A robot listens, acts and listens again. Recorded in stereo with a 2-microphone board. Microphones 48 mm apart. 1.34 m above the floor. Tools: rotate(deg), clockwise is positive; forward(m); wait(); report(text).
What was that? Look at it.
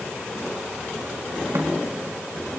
rotate(90)
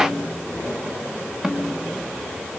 rotate(10)
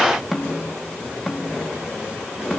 report("Found it: a snare drum, straight ahead, 2 to 4 m away.")